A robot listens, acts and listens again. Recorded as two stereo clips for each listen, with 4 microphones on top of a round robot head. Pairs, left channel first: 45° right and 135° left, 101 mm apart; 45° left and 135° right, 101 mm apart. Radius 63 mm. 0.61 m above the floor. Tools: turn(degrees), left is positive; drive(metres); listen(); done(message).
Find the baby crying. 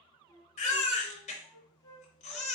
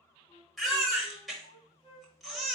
turn(degrees=-45)
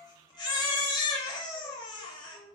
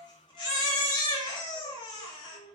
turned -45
done("Facing the baby crying.")